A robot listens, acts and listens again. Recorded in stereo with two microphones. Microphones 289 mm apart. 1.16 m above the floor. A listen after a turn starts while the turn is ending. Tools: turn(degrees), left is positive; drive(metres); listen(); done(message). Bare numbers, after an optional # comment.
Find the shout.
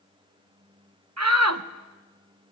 # The shout: about 65° right or 115° right.
turn(-65)
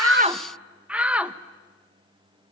done("Found it: a shout, straight ahead, 1 to 2 m away.")